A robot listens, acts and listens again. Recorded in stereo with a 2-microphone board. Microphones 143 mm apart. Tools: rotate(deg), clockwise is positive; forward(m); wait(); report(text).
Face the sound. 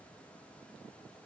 wait()
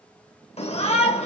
rotate(-45)
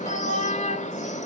rotate(-75)
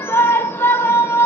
rotate(-20)
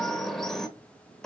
report("Facing the shout.")